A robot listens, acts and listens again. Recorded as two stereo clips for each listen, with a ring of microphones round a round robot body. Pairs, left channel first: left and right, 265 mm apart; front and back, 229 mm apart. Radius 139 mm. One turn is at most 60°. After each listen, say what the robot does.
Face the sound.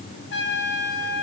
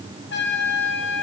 Turn 40° left.
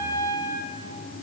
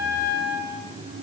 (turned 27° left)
Turn 15° left.
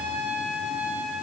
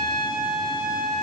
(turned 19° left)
Facing the trumpet.